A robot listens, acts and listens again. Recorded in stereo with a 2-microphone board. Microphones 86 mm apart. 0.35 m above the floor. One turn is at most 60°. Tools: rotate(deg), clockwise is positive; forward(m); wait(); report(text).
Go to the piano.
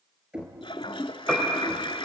rotate(-30)
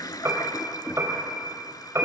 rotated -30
rotate(30)
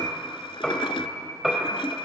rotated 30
forward(1.0)
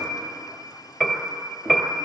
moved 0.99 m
forward(1.0)
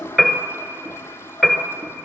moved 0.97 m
forward(1.0)
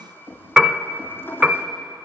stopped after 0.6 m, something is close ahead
rotate(10)
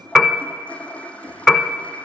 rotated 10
report("I am next to the piano.")